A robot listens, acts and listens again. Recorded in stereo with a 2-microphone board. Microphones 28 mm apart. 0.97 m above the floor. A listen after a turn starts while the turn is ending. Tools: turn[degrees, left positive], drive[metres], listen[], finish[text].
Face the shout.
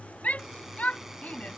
Thought: The shout: about 60° left or 120° left.
Action: turn[60]
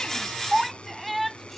Action: finish[Facing the shout.]